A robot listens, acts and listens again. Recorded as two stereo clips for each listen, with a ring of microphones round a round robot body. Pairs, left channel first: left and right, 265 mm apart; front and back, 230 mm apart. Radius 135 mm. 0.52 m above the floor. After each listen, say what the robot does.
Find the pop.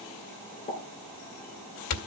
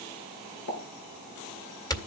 Turn 20° left.
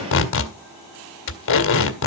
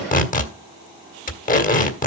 I heard a pop from this way, but can't make it out now.